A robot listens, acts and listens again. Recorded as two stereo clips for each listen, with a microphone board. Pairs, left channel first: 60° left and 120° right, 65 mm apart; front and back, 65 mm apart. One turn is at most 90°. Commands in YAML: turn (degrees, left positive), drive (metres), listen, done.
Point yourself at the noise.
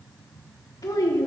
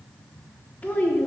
turn: 60
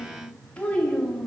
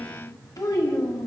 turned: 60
turn: -20
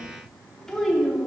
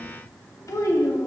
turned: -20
turn: -30
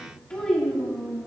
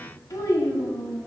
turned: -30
turn: -20
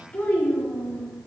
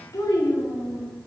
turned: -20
turn: -10
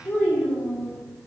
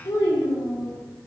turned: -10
done: "Found it: a child speaking, straight ahead, 2 to 4 m away."